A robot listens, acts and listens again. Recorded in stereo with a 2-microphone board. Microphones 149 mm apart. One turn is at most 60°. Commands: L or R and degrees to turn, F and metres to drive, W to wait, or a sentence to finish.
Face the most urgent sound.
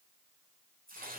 W
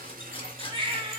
R35
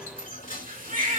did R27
R60
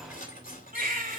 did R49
R60
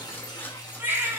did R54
R15
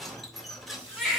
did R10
Found it: a baby crying, straight ahead.